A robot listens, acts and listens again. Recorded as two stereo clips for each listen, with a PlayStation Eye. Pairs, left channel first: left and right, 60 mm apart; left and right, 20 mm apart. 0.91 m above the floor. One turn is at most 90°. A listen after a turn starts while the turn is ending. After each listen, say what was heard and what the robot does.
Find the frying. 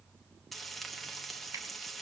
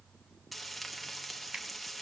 Turn 30° left.
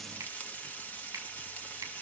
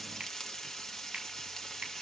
So it is at 150° left. Turn 90° left.
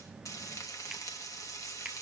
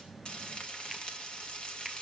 The frying is now 85° left. Turn 85° left.
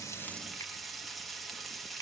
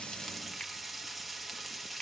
Found it: frying, straight ahead.